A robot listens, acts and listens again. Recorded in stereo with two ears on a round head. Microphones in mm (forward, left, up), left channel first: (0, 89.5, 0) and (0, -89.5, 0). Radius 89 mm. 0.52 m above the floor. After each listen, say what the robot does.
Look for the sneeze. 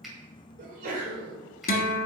Turn 40° right.
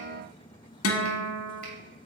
Keep listening.
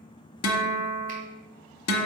I heard a sneeze, but can't make it out now. It was about straight ahead or 100° right.